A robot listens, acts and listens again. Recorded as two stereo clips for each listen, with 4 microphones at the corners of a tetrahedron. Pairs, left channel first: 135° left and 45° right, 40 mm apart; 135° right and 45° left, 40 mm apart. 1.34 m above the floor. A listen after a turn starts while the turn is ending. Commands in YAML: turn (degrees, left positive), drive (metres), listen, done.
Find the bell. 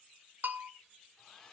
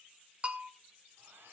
turn: -10
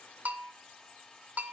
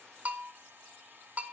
done: "Found it: a bell, straight ahead."